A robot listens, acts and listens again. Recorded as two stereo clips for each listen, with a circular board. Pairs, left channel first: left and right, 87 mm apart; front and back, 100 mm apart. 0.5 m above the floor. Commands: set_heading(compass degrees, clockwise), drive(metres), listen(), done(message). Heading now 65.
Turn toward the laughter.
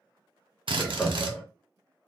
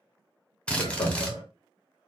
set_heading(55)
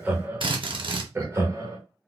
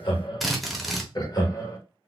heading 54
set_heading(99)
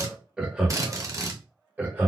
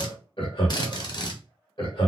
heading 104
set_heading(129)
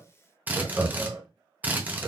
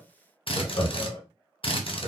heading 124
set_heading(134)
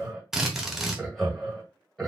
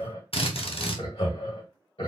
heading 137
done("Found it: laughter, straight ahead.")